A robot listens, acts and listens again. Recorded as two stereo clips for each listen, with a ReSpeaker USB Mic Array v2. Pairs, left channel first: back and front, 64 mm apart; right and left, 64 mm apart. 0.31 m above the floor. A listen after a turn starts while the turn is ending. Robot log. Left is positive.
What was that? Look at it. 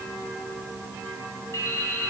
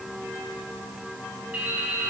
note: The dripping: 155° left.
cmd yaw +155
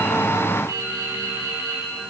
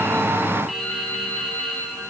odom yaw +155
end: Facing the dripping, 2 to 4 m away.